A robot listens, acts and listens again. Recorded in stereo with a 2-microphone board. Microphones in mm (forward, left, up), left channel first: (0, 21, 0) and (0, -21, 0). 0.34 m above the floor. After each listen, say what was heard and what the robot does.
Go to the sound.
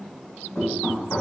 The knocking: about 60° left or 120° left. Turn 60° left.
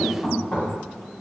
So it is at 25° left. Turn 25° left.
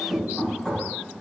Drive 1.0 m forward.
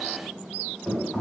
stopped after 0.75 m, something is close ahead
Arrived at the knocking, straight ahead.